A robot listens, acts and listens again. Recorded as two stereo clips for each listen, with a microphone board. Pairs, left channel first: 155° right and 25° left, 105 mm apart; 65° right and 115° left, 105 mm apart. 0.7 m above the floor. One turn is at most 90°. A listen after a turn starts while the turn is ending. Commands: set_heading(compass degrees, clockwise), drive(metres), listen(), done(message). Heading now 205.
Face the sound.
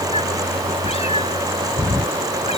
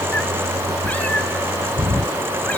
set_heading(295)
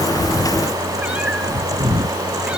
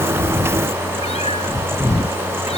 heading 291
set_heading(351)
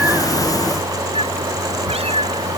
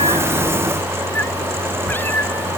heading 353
done("Found it: a cat meowing, straight ahead.")